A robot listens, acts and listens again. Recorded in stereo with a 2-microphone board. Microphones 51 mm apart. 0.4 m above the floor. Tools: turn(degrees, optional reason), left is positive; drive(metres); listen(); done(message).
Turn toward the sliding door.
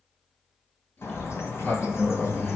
turn(degrees=40, reason="The sliding door: about 40° left or 140° left.")
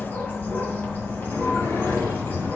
turn(degrees=100, reason="So it is at 100° left.")
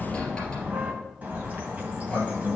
turn(degrees=15, reason="The sliding door is now 15° left.")
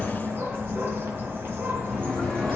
done("Facing the sliding door, 2 to 4 m away.")